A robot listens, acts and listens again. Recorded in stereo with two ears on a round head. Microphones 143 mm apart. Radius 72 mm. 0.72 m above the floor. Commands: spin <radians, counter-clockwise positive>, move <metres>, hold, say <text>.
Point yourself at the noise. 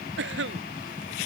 spin -1.57
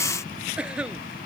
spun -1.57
say Facing the cough.